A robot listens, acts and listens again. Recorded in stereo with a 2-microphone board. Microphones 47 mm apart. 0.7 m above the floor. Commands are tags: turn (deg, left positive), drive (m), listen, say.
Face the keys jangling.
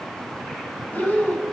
<listen/>
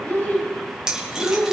<turn deg="-15"/>
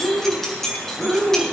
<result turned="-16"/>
<turn deg="30"/>
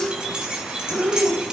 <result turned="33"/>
<turn deg="-20"/>
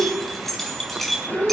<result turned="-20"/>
<say>Facing the keys jangling.</say>